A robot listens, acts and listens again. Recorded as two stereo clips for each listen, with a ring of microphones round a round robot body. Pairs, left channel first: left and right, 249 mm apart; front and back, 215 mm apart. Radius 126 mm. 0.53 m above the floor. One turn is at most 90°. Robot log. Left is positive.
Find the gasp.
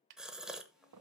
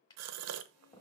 note: The gasp: 175° right.
cmd yaw -90
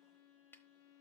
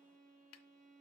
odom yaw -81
note: Nothing new. It was at 95° right.
cmd yaw -90
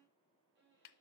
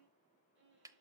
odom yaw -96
end: Facing where the gasp came from. I can't hear it now.